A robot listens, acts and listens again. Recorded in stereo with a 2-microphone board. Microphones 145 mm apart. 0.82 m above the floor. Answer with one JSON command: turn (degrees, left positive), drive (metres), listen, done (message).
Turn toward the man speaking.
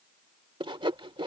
{"listen": true}
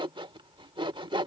{"listen": true}
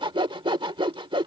{"done": "I can't make out a man speaking to turn to."}